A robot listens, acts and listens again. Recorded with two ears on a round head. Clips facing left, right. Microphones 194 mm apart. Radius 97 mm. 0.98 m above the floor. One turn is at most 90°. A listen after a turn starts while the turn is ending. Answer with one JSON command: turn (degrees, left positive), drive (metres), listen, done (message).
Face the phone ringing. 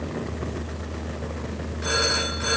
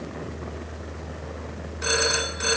{"turn": -40}
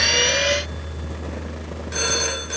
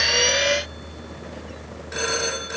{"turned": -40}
{"done": "Found it: a phone ringing, straight ahead."}